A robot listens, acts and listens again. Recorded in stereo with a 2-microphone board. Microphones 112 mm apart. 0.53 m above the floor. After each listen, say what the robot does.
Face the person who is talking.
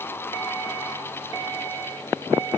Keep listening.
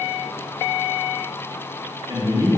Turn 30° right.
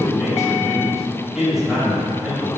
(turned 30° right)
Found it: a man speaking, straight ahead.